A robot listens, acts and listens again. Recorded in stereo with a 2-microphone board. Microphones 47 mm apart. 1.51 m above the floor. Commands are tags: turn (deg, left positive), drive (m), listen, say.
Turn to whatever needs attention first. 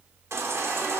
<turn deg="-70"/>
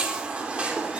<turn deg="-25"/>
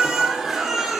<say>Facing the baby crying.</say>